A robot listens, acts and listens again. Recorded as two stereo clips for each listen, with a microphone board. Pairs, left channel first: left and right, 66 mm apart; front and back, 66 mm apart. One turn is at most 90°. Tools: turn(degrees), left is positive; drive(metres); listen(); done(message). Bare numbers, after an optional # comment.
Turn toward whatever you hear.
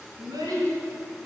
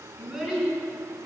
# The child speaking: 95° right.
turn(-90)
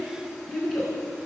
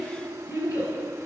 done("Found it: a child speaking, straight ahead.")